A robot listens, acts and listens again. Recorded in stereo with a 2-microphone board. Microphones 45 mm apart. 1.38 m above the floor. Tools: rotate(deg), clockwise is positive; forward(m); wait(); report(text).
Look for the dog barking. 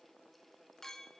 wait()
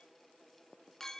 wait()
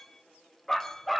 rotate(-30)
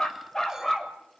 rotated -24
rotate(-30)
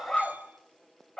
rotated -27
rotate(-15)
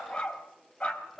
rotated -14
rotate(-150)
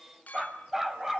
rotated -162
rotate(10)
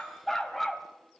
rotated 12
report("Found it: a dog barking, straight ahead.")